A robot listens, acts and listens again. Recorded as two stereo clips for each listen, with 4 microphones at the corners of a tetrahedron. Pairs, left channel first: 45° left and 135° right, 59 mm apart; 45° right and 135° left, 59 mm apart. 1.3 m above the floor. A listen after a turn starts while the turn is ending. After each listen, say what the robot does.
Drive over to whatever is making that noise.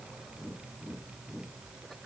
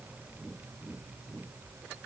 Keep listening.
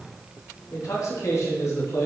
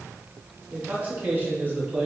Turn 75° left.
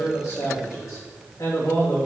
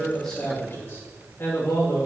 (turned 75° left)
Turn 10° left.
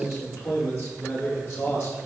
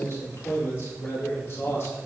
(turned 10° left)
Drive 1.0 m forward.
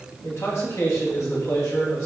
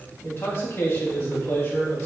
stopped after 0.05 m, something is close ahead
Turn 10° left.
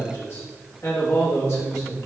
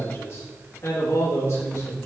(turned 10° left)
Blocked. The man speaking is further on, straight ahead.